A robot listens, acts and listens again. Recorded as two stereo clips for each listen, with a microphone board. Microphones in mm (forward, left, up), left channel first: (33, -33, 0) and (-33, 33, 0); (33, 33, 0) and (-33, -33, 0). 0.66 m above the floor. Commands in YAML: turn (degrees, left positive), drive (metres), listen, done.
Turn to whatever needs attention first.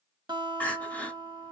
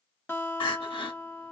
turn: 30
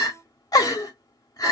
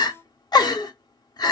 done: "Found it: crying, straight ahead."